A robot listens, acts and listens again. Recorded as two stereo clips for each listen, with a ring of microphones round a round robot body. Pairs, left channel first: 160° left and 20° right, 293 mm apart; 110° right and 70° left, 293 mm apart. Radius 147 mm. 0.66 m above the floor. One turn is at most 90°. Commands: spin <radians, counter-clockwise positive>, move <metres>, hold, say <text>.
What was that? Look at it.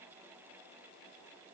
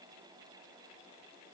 hold
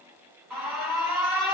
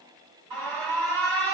spin 1.13
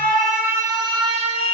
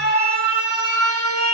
spin 0.26
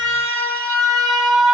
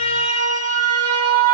say Facing the alarm, 1 to 2 m away.